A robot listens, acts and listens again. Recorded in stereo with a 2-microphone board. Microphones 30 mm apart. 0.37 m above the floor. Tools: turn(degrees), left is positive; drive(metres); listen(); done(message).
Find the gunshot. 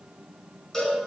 listen()
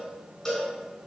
listen()
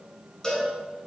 done("I can't make out a gunshot to turn to.")